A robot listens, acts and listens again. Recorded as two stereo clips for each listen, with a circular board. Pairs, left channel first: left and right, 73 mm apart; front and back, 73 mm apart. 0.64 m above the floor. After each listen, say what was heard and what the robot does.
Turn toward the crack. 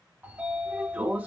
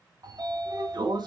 Keep listening.
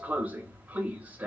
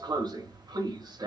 Keep listening.
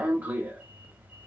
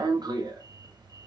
I can't make out a crack to turn to.